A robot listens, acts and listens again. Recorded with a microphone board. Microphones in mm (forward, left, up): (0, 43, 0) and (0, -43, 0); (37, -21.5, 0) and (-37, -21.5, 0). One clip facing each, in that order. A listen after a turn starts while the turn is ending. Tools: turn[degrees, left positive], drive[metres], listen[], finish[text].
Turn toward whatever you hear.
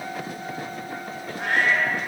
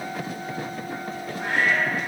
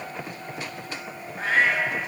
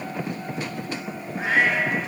Thought: The cat meowing: 100° left.
Action: turn[100]
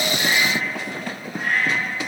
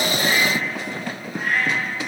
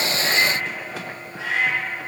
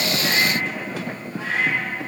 Action: finish[Found it: a cat meowing, straight ahead.]